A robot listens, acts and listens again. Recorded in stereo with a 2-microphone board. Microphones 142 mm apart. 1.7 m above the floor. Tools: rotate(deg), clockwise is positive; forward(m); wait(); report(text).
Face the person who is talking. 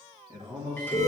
rotate(25)
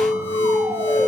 wait()
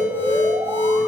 wait()
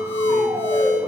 report("I heard a man speaking, but can't make it out now. It was about straight ahead or 130° right.")